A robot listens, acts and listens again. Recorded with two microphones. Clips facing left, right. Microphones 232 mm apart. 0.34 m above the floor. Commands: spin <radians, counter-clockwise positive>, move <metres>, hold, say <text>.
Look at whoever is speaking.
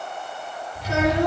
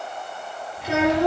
spin -1.13
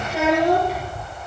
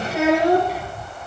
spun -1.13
say Facing the child speaking, over 4 m away.